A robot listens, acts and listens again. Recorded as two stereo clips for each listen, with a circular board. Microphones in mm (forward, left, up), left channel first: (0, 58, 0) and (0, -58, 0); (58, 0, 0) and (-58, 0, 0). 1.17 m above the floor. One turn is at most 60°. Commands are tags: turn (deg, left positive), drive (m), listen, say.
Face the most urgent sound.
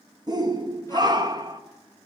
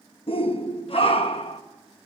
<turn deg="-35"/>
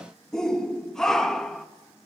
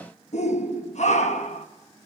<say>Found it: a shout, straight ahead.</say>